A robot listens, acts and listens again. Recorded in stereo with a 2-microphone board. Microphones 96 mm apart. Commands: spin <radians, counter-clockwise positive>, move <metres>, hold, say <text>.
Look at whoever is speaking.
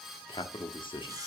spin 1.05
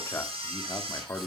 spin 0.61
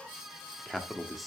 say Found it: a man speaking, straight ahead.